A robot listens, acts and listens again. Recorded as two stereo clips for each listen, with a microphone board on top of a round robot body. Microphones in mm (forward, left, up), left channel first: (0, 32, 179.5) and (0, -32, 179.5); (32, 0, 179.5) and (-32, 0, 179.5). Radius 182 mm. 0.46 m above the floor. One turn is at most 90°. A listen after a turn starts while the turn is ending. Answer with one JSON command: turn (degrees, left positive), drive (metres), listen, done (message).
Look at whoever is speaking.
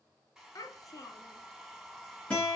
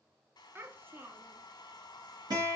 {"turn": 90}
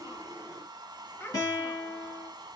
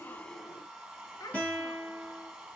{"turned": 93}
{"turn": 30}
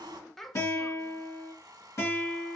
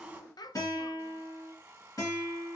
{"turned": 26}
{"done": "Facing the child speaking."}